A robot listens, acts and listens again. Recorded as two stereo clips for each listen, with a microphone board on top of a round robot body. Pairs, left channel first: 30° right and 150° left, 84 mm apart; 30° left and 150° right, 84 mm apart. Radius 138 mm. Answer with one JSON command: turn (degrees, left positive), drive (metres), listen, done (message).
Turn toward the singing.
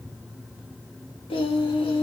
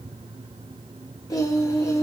{"turn": -25}
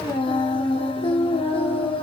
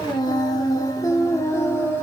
{"turn": -35}
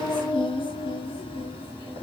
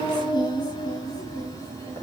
{"turn": -30}
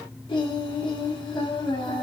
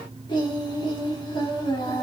{"done": "Found it: singing, straight ahead, 1 to 2 m away."}